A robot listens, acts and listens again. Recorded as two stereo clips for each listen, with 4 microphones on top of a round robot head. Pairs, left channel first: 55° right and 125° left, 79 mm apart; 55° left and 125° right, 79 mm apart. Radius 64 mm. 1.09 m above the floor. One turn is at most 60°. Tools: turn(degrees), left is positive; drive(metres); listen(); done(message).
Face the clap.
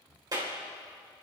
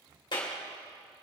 turn(degrees=60)
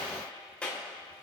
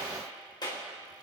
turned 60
turn(degrees=20)
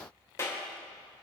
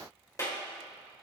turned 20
done("Found it: a clap, straight ahead.")